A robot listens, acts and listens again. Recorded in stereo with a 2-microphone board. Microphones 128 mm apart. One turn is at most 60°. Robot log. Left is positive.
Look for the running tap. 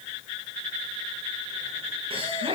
cmd idle
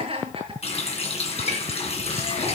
note: The running tap: about 60° left or 120° left.
cmd yaw +60
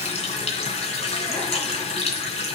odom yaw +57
note: So it is at 60° left.
cmd yaw +60
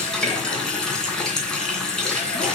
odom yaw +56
end: Facing the running tap.